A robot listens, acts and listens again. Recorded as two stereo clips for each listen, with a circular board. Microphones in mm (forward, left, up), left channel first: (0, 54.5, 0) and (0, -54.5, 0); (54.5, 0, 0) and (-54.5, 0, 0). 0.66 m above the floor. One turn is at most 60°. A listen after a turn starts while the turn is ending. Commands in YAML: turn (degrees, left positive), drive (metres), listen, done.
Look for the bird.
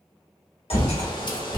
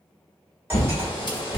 turn: 45
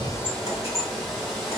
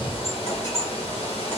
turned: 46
done: "Facing the bird."